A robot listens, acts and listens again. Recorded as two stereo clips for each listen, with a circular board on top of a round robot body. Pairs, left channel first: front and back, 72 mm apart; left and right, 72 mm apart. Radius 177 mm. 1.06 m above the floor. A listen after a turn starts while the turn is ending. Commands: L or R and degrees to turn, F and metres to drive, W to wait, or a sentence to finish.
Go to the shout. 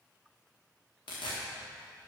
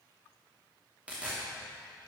W
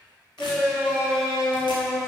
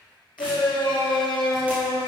L85
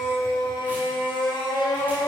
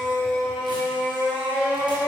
R10
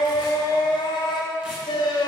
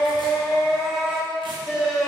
F1.0
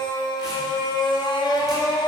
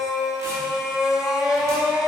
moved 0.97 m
R10
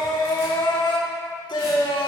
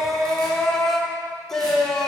F1.0
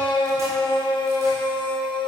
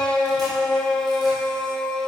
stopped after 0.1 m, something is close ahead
L10
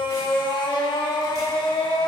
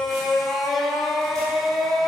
Arrived at the shout, straight ahead.